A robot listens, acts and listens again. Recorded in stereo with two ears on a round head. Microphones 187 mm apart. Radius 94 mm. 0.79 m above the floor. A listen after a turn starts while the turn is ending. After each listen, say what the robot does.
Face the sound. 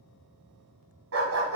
Turn 75° right.
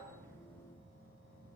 Keep listening.
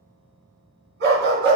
Turn 60° right.
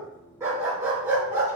Turn 15° right.
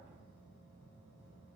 Keep listening.
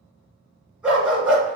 Facing the dog barking, 2 to 4 m away.